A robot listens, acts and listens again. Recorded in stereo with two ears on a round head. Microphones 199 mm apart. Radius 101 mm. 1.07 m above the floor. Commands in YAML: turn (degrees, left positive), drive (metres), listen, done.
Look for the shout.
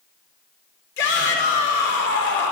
turn: 55
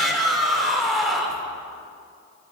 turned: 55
done: "Found it: a shout, straight ahead, 2 to 4 m away."